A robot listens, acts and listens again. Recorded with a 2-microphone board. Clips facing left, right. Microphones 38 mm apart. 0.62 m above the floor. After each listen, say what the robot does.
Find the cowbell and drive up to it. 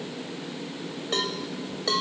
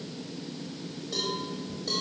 Turn 65° left.
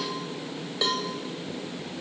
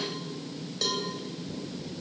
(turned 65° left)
Turn 45° left.
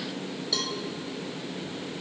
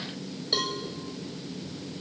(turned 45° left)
Turn 15° right.
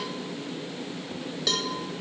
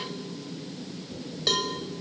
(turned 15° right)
Drive 1.0 m forward.
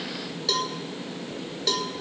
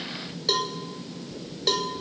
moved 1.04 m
Drive 1.0 m forward.
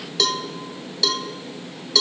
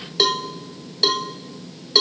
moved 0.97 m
Turn 15° right.
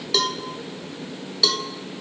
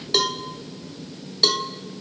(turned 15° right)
Drive 1.0 m forward.
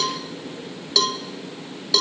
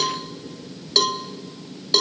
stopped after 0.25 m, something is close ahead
Arrived at the cowbell, straight ahead.